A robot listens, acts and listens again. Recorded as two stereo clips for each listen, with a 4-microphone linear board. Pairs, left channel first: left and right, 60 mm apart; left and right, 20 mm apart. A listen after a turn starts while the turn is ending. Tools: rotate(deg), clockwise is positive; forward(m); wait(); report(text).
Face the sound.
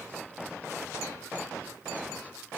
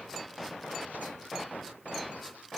wait()
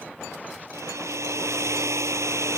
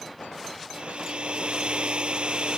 rotate(55)
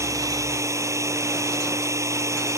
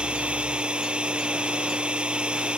rotate(65)
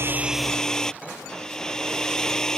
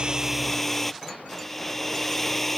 rotate(-10)
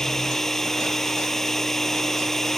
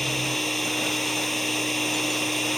report("Found it: a hair dryer, straight ahead.")